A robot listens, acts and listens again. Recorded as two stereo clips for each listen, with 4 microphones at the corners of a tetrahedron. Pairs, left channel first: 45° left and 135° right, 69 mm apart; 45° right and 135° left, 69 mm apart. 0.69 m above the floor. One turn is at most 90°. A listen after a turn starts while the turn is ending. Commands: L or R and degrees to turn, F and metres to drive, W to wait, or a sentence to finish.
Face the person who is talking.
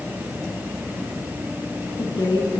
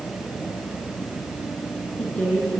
L30
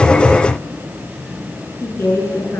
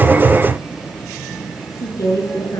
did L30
R10
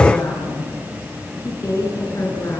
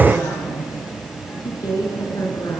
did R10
Facing the woman speaking.